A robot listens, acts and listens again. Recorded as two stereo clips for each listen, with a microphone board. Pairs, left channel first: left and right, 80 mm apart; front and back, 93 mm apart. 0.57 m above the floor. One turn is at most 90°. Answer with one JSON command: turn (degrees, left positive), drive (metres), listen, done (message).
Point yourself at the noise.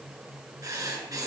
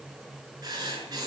{"turn": -90}
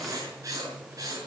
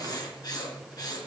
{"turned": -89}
{"turn": -45}
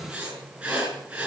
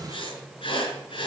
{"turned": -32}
{"turn": -15}
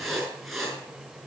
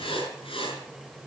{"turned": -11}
{"done": "Facing the writing."}